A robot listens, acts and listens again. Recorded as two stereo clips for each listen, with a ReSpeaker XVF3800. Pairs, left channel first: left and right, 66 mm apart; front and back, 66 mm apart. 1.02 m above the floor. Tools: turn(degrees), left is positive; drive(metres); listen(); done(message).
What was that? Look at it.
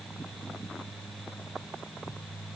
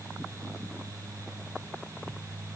listen()
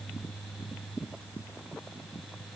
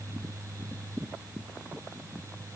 listen()
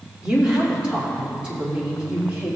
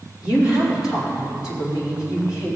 turn(degrees=-20)
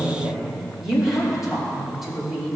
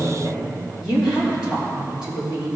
done("Found it: a woman speaking, straight ahead.")